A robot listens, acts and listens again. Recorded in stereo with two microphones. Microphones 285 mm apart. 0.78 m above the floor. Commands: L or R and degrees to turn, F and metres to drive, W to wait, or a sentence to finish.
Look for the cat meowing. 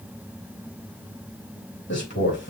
W
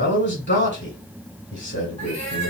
L65
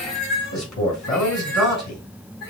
L50
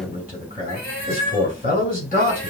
Facing the cat meowing, over 4 m away.